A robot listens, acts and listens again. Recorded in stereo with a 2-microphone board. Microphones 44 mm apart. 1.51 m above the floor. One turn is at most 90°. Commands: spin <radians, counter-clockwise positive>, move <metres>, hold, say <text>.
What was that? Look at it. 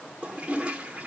spin -0.44
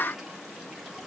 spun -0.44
hold
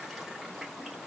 hold
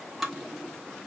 say Found it: a toilet flushing, straight ahead, 1 to 2 m away.